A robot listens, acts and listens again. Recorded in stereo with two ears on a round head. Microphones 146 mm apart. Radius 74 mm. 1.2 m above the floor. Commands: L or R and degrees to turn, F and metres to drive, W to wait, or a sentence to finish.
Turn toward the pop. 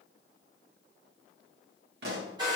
R65
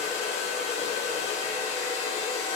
W
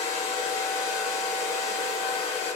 I heard a pop, but can't make it out now. It was about straight ahead or 50° right.